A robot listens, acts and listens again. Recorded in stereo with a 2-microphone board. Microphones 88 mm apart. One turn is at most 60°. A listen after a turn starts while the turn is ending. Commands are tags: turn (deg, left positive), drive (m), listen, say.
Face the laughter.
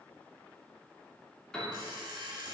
<listen/>
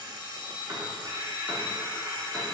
<listen/>
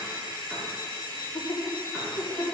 <turn deg="55"/>
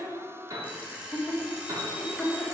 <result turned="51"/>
<say>Found it: laughter, straight ahead.</say>